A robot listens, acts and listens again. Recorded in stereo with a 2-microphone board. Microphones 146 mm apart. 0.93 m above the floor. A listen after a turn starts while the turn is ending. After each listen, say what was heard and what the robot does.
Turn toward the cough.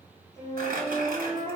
Keep listening.
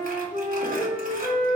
Keep listening.
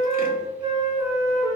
I can't make out a cough, only a flute and crumpling.